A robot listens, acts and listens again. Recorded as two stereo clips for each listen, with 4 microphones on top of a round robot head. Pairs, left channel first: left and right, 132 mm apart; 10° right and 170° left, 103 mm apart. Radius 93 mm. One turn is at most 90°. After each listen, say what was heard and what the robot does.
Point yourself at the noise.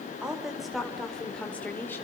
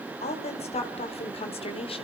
The woman speaking: 15° left. Turn 15° left.
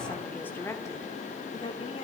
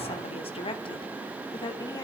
The woman speaking is now 40° left. Turn 40° left.
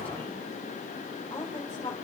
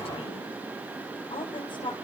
The woman speaking is now 25° left. Turn 25° left.
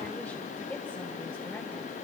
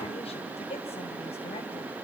The woman speaking is now 10° left. Turn 10° left.
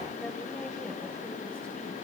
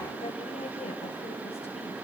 Keep listening.
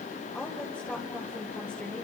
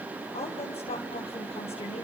Found it: a woman speaking, straight ahead.